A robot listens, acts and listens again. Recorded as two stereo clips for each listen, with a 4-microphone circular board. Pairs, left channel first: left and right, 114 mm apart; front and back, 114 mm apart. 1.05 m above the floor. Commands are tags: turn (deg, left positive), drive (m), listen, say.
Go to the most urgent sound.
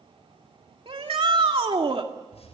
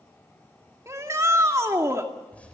<turn deg="-120"/>
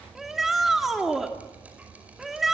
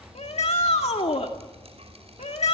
<drive m="1.0"/>
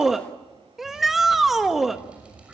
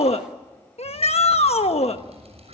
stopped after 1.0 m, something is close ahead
<say>Arrived at the shout, straight ahead.</say>